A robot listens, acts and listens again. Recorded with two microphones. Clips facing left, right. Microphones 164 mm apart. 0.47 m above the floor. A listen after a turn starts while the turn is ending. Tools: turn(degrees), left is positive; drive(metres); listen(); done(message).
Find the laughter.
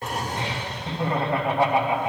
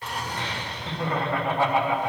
turn(degrees=20)
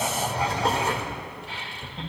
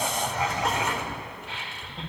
done("Found it: laughter, straight ahead.")